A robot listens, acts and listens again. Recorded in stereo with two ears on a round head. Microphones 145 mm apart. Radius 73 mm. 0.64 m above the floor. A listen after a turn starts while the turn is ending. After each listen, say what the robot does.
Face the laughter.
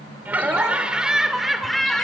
Turn 30° left.
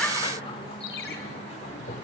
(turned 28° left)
Turn 135° left.
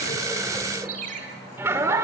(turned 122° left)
Turn 20° right.
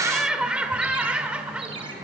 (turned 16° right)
Facing the laughter, 2 to 4 m away.